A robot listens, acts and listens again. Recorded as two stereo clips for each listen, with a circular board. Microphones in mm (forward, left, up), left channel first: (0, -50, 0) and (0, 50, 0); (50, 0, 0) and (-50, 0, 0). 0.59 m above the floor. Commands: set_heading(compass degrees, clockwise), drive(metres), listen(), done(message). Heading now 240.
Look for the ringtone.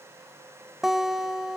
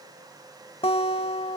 listen()
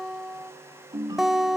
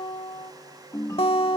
set_heading(190)
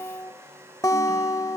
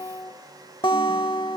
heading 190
listen()
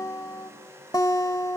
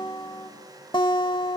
listen()
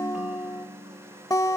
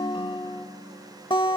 set_heading(180)
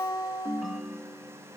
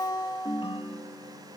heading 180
done("Found it: a ringtone, straight ahead.")